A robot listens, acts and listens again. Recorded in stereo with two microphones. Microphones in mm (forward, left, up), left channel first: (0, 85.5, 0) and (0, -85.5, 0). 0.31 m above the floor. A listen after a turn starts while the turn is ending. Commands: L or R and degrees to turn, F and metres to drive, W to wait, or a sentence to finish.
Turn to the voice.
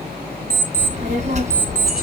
R45
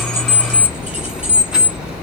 Facing the child speaking, 1 to 2 m away.